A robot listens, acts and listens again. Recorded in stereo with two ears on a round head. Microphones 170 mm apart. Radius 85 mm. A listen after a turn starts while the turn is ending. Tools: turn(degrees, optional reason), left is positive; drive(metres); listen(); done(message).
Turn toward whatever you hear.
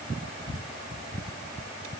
listen()
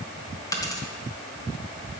turn(degrees=20, reason="The dropped coin: about 20° left or 160° left.")
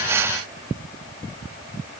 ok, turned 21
listen()
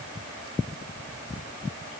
done("I heard a dropped coin, but can't make it out now. It was about 5° right or 140° left.")